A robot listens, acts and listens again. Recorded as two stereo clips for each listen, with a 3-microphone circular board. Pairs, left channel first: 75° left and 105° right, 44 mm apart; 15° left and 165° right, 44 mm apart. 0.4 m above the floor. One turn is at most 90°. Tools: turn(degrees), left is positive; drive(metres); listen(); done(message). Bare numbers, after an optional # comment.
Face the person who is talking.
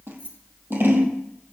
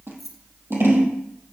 listen()
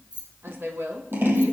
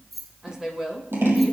# The woman speaking: 90° right.
turn(-90)
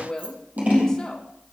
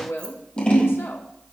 done("Facing the woman speaking.")